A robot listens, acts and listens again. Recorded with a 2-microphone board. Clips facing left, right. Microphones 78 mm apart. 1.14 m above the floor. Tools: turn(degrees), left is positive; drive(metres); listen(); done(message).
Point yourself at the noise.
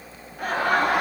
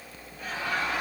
turn(degrees=60)
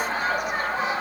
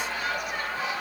turn(degrees=40)
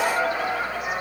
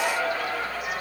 turn(degrees=20)
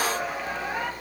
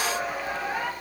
listen()
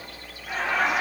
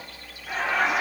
done("Found it: laughter, straight ahead, 1 to 2 m away.")